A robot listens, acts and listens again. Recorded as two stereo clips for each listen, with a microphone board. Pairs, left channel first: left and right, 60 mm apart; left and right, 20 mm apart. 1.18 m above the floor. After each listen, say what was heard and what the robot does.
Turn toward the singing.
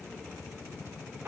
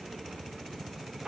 Keep listening.
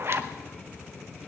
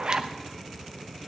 Keep listening.
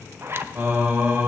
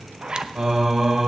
The singing: about 35° right or 145° right. Turn 35° right.
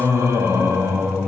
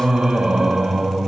So it is at 135° right. Turn 135° right.
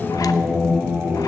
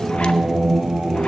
The singing is now 40° right. Turn 40° right.
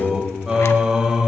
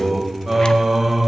The singing is now 10° right. Turn 10° right.
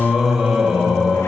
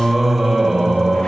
Facing the singing, 1 to 2 m away.